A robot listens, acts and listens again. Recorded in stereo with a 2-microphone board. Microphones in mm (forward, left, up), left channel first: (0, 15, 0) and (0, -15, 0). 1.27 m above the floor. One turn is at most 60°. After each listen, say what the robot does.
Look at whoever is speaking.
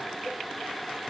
Keep listening.
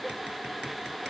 Keep listening.
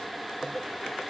I can't make out anyone speaking.